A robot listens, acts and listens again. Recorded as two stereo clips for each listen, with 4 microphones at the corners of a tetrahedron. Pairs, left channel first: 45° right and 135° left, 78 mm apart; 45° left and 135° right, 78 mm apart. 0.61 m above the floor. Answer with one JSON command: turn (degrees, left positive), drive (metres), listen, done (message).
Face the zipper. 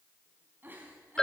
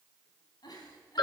{"listen": true}
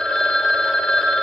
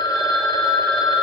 {"listen": true}
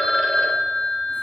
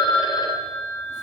{"done": "I can't make out a zipper to turn to."}